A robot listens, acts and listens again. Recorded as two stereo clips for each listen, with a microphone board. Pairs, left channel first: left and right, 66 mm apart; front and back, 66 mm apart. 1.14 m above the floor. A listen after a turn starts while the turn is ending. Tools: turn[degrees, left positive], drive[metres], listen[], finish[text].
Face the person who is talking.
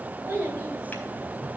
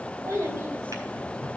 Thought: The child speaking: 145° right.
Action: turn[-145]
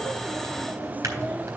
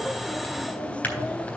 Action: listen[]
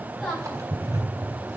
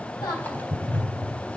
Action: finish[Found it: a child speaking, straight ahead.]